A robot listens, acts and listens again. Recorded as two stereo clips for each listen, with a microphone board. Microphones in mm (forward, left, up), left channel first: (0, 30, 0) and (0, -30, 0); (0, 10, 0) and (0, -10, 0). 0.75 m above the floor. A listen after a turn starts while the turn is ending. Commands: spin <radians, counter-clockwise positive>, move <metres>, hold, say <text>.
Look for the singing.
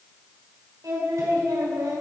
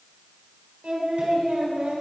spin -1.22
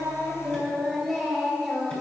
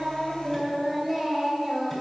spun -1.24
say Found it: singing, straight ahead, over 4 m away.